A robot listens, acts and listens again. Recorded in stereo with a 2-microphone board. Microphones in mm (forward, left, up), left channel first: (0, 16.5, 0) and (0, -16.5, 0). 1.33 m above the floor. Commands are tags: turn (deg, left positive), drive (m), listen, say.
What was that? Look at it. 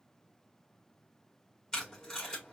<turn deg="25"/>
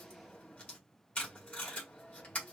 <turn deg="135"/>
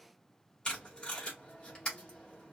<turn deg="25"/>
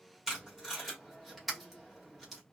<turn deg="-10"/>
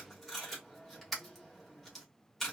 <say>Facing the tape being pulled, 2 to 4 m away.</say>